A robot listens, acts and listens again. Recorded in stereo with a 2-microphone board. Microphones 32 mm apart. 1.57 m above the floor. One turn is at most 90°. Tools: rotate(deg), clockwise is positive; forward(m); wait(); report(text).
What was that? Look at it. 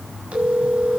rotate(40)
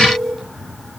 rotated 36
report("Found it: a phone ringing, straight ahead, over 4 m away.")